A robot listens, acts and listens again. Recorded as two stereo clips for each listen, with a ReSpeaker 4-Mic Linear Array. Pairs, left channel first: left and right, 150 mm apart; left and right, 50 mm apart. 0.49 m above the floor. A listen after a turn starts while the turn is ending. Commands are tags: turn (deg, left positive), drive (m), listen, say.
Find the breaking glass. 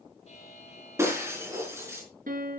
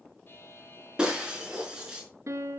<turn deg="-15"/>
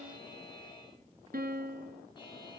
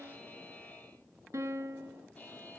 <listen/>
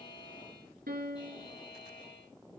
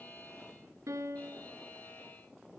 <say>I heard breaking glass, but can't make it out now. It was about straight ahead or 150° right.</say>